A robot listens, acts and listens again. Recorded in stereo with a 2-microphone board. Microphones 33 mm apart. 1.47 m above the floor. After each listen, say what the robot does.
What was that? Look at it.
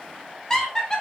Turn 20° left.
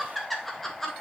Turn 30° left.
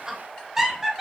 Turn 10° right.
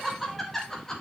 Turn 15° left.
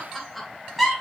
Facing the laughter.